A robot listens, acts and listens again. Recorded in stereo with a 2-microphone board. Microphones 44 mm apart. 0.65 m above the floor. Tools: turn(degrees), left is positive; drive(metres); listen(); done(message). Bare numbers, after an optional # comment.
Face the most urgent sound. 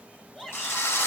# The shout: about 15° left or 165° left.
turn(15)
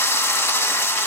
listen()
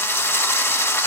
listen()
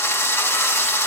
done("I heard a shout, but can't make it out now. It was about straight ahead or 150° left.")